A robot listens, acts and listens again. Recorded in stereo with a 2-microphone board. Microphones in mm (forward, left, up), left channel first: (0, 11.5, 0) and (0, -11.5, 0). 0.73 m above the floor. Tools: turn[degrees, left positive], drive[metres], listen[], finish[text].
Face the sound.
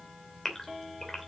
Thought: The gasp: about 20° left or 160° left.
Action: turn[20]
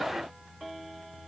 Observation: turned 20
Action: listen[]
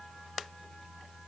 Action: finish[I heard a gasp, but can't make it out now. It was about straight ahead or 140° left.]